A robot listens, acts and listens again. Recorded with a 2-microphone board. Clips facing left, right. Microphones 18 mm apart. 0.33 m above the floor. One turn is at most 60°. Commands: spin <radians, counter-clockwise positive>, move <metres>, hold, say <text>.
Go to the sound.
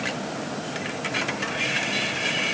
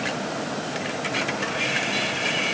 hold
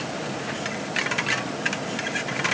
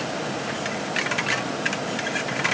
hold
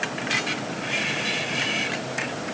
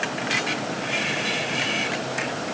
say I can't make out anything.